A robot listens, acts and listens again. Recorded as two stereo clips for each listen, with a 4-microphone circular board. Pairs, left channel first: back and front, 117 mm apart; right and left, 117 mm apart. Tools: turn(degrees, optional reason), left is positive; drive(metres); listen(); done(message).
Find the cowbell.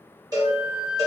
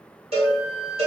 turn(degrees=60, reason="The cowbell: 60° left.")
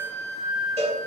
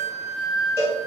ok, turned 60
turn(degrees=20, reason="The cowbell is now 20° left.")
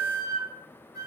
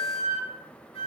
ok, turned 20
listen()
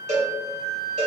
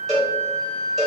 done("Found it: a cowbell, straight ahead, 1 to 2 m away.")